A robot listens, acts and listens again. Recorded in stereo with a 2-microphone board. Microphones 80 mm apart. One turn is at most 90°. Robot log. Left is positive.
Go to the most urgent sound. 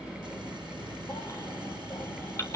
note: The baby crying: about 35° left or 145° left.
cmd yaw +35
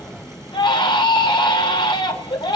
note: So it is at 110° left.
cmd yaw +90
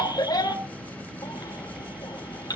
note: The baby crying is now 50° left.
cmd yaw +50
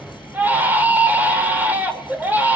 note: The baby crying is now 20° right.
cmd yaw -20
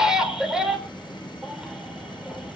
cmd fwd 1.0
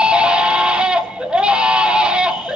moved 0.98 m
note: The baby crying is now 10° right.
cmd yaw -10
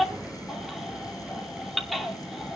cmd fwd 1.0
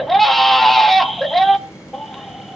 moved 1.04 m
cmd fwd 1.0
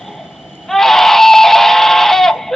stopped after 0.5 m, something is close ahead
end: Arrived at the baby crying, straight ahead.